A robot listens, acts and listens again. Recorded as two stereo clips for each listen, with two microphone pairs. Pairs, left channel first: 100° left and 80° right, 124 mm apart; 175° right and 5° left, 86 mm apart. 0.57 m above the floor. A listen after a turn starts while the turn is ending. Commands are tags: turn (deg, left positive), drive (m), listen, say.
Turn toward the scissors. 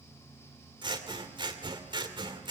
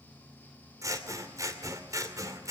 <turn deg="-35"/>
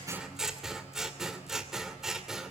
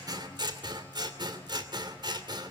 <say>Found it: scissors, straight ahead.</say>